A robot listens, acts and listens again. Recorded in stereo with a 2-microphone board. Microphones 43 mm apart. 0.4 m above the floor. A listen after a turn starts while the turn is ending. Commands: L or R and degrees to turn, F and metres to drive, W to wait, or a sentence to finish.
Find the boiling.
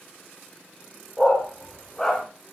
W
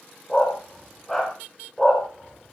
W
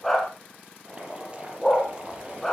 R25
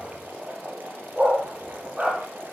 R125
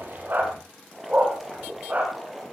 Facing the boiling.